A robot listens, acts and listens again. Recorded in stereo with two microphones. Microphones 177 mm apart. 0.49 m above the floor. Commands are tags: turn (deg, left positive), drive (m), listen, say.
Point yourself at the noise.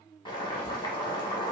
<turn deg="25"/>
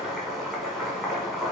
<say>Facing the boiling.</say>